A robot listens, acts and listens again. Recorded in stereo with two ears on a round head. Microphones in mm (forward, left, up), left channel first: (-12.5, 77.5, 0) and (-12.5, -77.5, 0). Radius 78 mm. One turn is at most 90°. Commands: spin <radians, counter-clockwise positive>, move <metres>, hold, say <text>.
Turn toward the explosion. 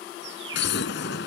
spin 1.22
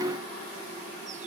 hold
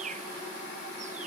say I heard an explosion, but can't make it out now. It was about straight ahead or 40° left.